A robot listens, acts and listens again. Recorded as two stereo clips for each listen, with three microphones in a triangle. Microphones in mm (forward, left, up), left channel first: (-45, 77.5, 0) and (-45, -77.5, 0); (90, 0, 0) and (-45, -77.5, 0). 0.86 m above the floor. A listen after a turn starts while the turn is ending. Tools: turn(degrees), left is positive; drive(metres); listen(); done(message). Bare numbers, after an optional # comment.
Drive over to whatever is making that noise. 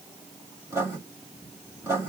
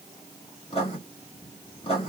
# The writing: 20° right.
turn(-20)
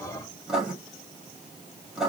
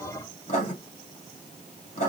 drive(1.0)
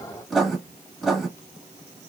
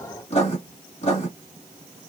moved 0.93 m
drive(1.0)
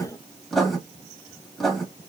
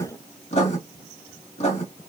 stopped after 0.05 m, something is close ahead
done("Arrived at the writing, straight ahead.")